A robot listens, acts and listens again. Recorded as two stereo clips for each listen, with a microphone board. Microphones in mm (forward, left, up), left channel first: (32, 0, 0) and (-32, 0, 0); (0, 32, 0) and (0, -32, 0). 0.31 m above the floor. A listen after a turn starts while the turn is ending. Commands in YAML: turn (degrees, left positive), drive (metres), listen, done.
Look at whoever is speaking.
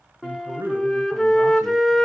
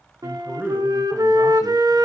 turn: -140
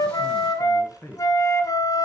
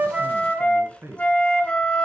turn: -40
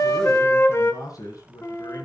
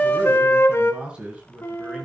turn: -15
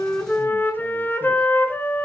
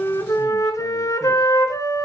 listen: true
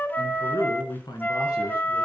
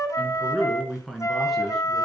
done: "Found it: a man speaking, straight ahead."